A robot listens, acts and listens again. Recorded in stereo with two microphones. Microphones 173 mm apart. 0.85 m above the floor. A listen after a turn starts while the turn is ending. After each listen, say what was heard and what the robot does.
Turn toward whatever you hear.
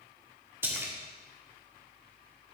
Turn 30° right.
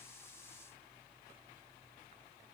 Keep listening.
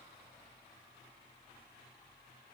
I heard a splash, but can't make it out now. It was about 20° left or 140° right.